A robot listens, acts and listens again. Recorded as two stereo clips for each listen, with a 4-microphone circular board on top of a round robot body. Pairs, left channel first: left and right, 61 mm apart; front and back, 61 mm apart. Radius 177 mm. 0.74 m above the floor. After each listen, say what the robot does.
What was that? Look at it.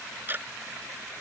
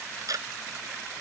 Turn 150° right.
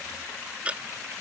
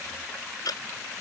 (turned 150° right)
Turn 20° right.
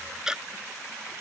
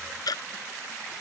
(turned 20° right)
Turn 10° right.
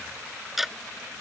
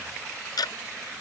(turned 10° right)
Facing the ticking.